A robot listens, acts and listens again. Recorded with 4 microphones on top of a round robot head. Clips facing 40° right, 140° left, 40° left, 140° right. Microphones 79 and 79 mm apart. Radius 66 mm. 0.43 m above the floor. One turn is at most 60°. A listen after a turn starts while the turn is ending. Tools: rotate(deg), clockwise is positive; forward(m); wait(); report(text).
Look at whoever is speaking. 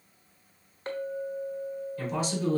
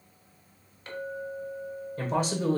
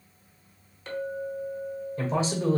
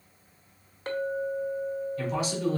rotate(-60)
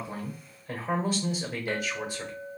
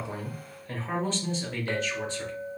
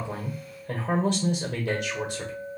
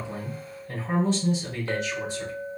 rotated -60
rotate(-40)
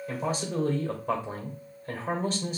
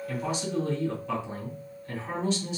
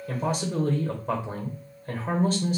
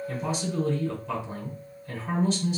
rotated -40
report("Facing the man speaking.")